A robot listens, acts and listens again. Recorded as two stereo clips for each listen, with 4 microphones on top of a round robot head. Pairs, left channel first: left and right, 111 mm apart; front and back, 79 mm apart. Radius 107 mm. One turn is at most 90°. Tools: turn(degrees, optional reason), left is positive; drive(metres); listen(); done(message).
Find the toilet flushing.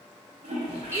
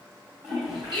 turn(degrees=-90, reason="The toilet flushing: 120° right.")
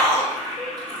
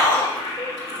turn(degrees=-30, reason="The toilet flushing is now 30° right.")
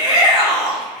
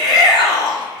listen()
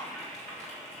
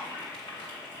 done("Found it: a toilet flushing, straight ahead.")